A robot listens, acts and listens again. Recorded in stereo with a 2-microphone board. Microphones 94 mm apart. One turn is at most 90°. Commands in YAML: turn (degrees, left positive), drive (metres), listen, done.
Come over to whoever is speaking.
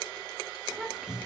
turn: -30
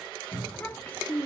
turn: 20
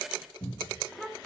drive: 1.0
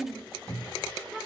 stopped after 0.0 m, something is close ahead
done: "Something is in my way. I am facing the child speaking but have not reached it."